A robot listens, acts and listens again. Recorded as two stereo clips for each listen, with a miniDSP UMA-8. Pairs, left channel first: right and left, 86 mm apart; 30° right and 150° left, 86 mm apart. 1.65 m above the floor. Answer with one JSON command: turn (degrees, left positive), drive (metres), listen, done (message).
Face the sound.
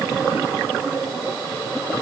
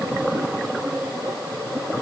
{"listen": true}
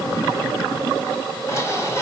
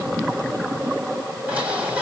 {"turn": -140}
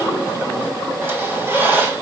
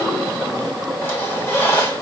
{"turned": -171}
{"turn": 30}
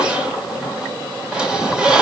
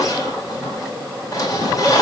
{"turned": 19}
{"turn": 15}
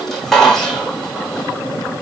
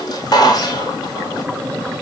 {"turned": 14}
{"done": "Found it: a squeak, straight ahead, 1 to 2 m away."}